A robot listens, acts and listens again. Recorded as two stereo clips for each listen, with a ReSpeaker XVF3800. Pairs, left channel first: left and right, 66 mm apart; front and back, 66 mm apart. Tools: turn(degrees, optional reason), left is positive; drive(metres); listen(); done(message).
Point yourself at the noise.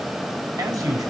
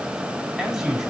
turn(degrees=-95, reason="The man speaking: 95° right.")
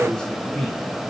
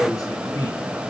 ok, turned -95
turn(degrees=15, reason="The man speaking is now 15° left.")
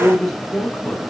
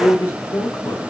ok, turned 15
turn(degrees=10, reason="The man speaking is now 10° left.")
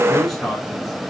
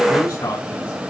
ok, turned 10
done("Facing the man speaking, over 4 m away.")